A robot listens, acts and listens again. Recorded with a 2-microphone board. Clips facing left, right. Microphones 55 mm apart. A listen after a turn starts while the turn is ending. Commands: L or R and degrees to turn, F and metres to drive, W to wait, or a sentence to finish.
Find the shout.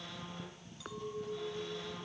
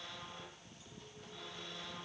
W
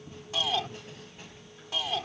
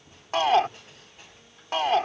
R55
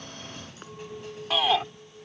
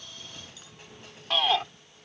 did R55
Found it: a shout, straight ahead.